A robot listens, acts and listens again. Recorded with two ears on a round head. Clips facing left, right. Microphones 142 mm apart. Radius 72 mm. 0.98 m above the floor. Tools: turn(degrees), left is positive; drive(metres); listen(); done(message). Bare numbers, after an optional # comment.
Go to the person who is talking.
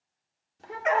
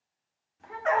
# The child speaking: about 45° left or 135° left.
turn(45)
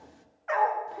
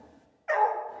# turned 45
# So it is at 90° left.
turn(90)
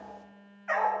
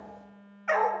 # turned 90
listen()
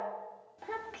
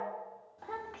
# The child speaking is now 25° left.
turn(25)
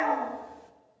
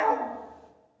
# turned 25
listen()
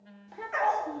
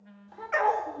# The child speaking is now 20° left.
turn(20)
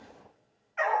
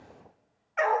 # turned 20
listen()
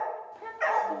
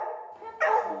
drive(1.0)
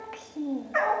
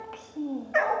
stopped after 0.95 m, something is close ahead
# The child speaking is now 10° left.
turn(10)
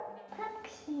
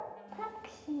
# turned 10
done("I am next to the child speaking.")